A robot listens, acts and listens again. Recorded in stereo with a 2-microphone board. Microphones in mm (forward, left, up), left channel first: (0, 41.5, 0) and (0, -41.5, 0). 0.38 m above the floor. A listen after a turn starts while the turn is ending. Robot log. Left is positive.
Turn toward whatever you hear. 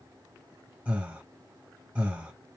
note: The breathing: about 15° right or 165° right.
cmd yaw -15
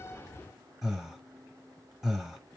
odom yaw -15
end: Facing the breathing, 1 to 2 m away.